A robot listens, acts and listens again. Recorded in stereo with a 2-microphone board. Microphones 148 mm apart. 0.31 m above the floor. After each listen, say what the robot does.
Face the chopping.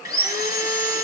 Keep listening.
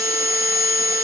Keep listening.
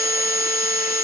I can't make out chopping to turn to.